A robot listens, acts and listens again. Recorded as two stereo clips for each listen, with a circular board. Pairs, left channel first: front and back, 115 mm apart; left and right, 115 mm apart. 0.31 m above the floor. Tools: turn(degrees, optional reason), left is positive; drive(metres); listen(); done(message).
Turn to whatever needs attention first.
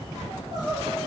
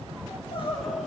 turn(degrees=125, reason="The crying: 125° left.")
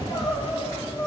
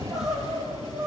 done("Found it: crying, straight ahead, over 4 m away.")